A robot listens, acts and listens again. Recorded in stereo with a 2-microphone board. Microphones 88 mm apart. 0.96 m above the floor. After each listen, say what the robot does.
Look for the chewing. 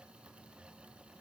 Keep listening.
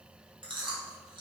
Turn 70° right.
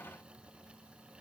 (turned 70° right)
Keep listening.
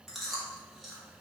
Found it: chewing, straight ahead, under 1 m away.